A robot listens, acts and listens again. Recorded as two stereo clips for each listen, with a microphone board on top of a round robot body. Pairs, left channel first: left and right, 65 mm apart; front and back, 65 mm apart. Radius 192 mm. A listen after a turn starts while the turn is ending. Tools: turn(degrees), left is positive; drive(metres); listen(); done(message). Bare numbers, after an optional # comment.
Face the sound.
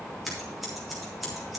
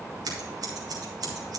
# The scissors: straight behind.
turn(180)
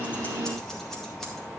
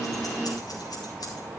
listen()
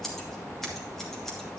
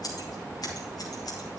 done("Found it: scissors, straight ahead.")